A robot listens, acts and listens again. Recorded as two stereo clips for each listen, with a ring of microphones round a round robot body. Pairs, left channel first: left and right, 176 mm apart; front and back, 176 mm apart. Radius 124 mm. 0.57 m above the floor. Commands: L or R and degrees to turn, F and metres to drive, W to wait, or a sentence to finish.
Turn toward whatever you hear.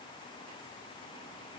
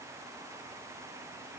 W
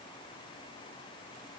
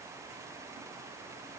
W
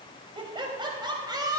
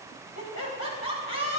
R20
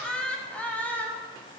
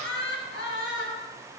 L10
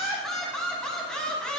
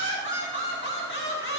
Facing the laughter, over 4 m away.